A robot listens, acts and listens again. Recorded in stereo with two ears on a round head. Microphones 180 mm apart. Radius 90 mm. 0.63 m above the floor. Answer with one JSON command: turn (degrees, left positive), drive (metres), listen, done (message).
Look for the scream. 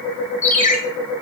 {"listen": true}
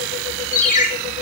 {"listen": true}
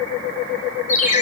{"done": "I can't make out a scream to turn to."}